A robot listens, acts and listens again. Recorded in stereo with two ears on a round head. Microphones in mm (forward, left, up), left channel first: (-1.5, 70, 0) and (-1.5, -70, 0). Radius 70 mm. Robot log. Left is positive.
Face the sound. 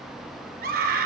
note: The scream: about 65° right or 115° right.
cmd yaw -65
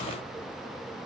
cmd idle
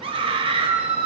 note: So it is at 40° right.
cmd yaw -40
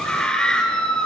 end: Found it: a scream, straight ahead, 2 to 4 m away.